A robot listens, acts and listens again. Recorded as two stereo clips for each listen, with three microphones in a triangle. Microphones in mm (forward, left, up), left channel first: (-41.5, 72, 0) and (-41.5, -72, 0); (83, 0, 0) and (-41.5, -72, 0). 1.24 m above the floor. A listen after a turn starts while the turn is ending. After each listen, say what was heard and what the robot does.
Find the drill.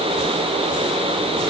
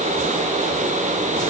Keep listening.
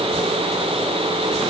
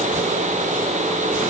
Keep listening.
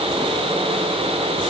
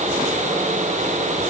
I can't make out a drill to turn to.